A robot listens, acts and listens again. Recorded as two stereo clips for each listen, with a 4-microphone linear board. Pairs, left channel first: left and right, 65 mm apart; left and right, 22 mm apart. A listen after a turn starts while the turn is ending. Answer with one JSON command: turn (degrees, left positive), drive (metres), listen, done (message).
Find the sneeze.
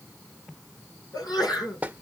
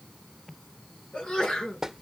{"turn": 90}
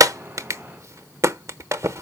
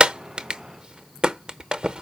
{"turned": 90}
{"done": "I heard a sneeze from this way, but can't make it out now."}